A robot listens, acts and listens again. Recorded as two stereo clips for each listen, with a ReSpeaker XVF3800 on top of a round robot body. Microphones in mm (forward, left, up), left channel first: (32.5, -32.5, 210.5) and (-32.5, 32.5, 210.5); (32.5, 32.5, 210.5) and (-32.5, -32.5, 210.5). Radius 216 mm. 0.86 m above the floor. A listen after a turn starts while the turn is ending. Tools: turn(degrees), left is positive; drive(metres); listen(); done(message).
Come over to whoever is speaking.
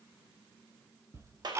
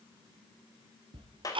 listen()
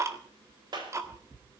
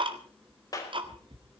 listen()
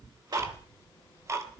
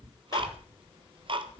turn(degrees=-105)
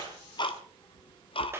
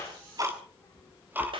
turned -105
drive(metres=1.0)
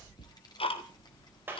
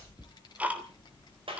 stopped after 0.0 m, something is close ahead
done("Something is in my way. I am facing the child speaking but have not reached it.")